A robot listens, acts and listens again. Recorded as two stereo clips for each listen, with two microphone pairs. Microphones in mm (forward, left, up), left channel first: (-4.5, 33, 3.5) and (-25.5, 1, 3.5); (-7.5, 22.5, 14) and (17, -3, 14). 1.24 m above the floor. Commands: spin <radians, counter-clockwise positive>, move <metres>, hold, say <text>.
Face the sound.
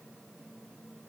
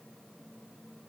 hold
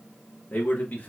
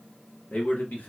spin 1.75
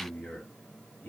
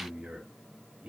spin 0.44
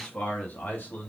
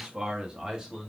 spin 0.52
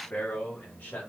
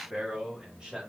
spin 0.44
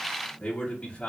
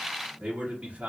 say Found it: a man speaking, straight ahead.